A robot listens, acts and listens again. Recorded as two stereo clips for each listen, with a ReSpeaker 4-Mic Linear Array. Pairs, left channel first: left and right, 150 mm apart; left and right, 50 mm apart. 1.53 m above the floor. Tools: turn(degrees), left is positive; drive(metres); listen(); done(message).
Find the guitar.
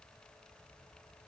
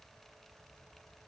listen()
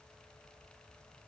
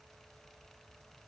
listen()
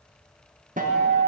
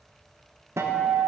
turn(degrees=-60)
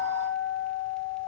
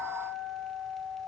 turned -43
turn(degrees=-70)
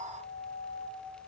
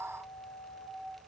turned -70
done("Found it: a guitar, straight ahead, 1 to 2 m away.")